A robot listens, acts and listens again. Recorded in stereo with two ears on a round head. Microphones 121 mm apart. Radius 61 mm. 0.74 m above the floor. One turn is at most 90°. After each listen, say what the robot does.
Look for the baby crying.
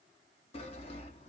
Keep listening.
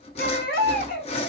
Turn 90° left.
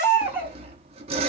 Turn 10° right.
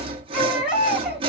Found it: a baby crying, straight ahead, 1 to 2 m away.